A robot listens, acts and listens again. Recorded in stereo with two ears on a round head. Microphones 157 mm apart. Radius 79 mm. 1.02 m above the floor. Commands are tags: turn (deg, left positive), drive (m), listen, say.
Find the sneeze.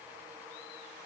<listen/>
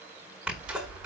<turn deg="-30"/>
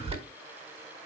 <turn deg="-145"/>
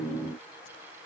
<say>I heard a sneeze from this way, but can't make it out now.</say>